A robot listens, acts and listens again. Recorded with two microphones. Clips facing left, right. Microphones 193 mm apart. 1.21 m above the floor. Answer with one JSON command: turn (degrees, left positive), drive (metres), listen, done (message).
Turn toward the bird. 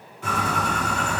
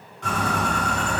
{"turn": 30}
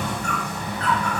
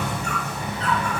{"turn": -25}
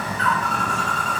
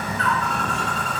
{"done": "Found it: a bird, straight ahead."}